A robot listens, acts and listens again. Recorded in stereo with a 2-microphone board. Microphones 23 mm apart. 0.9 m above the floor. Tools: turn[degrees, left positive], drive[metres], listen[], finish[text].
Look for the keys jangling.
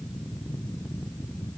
Action: listen[]
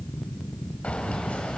Action: turn[90]
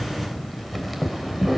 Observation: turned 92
Thought: So it is at 10° right.
Action: turn[-10]
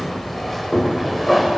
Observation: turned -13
Action: finish[Found it: keys jangling, straight ahead, 2 to 4 m away.]